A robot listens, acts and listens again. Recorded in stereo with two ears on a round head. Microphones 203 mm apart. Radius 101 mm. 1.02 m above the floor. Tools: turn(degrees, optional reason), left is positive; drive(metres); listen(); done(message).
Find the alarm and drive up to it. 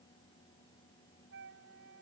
listen()
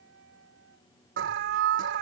turn(degrees=-55, reason="The alarm: about 55° right or 125° right.")
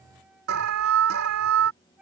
turn(degrees=-70, reason="So it is at 70° right.")
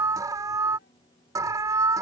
turn(degrees=-15, reason="The alarm is now 15° right.")
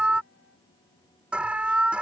drive(metres=1.0)
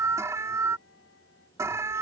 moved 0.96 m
turn(degrees=-15, reason="The alarm is now 15° right.")
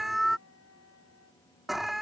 drive(metres=1.0)
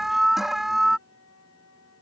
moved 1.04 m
drive(metres=1.0)
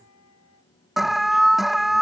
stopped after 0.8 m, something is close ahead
done("I am next to the alarm.")